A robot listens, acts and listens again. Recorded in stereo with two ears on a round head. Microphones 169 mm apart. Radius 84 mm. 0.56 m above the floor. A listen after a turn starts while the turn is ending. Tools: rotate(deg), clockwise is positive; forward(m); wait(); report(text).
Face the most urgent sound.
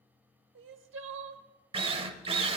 rotate(70)
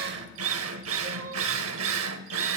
rotate(40)
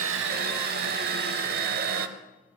wait()
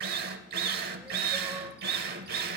wait()
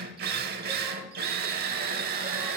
report("I heard crying from this way, but can't make it out now.")